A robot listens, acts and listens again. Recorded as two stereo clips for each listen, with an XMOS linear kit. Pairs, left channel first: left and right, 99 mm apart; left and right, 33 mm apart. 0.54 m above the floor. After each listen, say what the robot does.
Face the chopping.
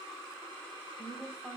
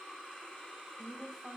Keep listening.
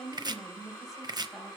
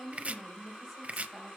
Turn 45° right.
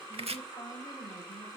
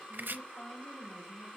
Turn 90° right.
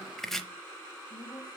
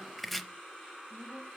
Found it: chopping, straight ahead.